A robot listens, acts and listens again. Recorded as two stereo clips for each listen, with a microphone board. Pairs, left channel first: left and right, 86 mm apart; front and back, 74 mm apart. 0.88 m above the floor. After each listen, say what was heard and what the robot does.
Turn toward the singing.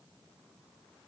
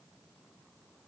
Keep listening.
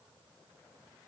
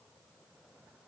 Keep listening.
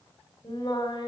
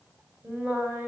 The singing: 115° left. Turn 115° left.
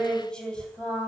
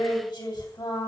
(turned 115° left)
The singing is now 15° left. Turn 15° left.
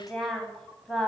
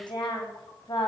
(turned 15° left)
Found it: singing, straight ahead, 2 to 4 m away.